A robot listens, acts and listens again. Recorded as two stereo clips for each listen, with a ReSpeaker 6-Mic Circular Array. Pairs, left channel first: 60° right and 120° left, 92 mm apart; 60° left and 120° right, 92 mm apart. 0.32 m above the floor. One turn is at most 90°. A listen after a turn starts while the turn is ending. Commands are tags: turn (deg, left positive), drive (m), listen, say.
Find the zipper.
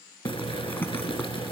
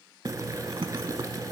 <turn deg="-90"/>
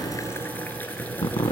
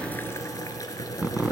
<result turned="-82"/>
<turn deg="-45"/>
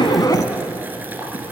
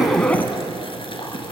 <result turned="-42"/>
<listen/>
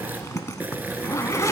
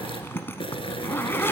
<say>Facing the zipper, under 1 m away.</say>